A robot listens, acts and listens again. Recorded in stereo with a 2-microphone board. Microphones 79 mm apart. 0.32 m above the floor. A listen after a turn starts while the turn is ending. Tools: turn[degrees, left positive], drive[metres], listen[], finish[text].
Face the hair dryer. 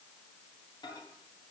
Action: listen[]
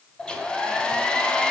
Action: turn[30]
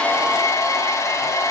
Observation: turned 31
Thought: So it is at 140° left.
Action: turn[140]
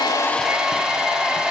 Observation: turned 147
Thought: The hair dryer is now 10° right.
Action: turn[-10]
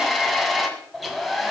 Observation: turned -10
Action: finish[Facing the hair dryer, 1 to 2 m away.]